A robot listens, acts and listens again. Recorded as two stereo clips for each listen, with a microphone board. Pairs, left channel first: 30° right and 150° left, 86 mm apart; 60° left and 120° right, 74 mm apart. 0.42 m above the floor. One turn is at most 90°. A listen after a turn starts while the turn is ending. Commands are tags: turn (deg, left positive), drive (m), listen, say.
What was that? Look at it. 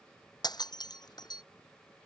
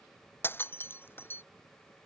<say>Found it: breaking glass, straight ahead.</say>